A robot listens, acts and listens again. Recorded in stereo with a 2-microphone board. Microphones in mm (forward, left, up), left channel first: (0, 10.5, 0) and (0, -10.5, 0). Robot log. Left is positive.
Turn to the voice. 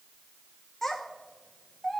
note: The child speaking: about 15° left or 165° left.
cmd yaw +15
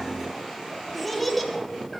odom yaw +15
end: Facing the child speaking, 1 to 2 m away.